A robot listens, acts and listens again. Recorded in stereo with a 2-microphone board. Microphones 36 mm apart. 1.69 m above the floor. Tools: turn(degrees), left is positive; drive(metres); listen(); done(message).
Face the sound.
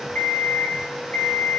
turn(degrees=60)
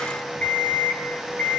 turn(degrees=55)
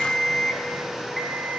done("Found it: an alarm clock, straight ahead, 2 to 4 m away.")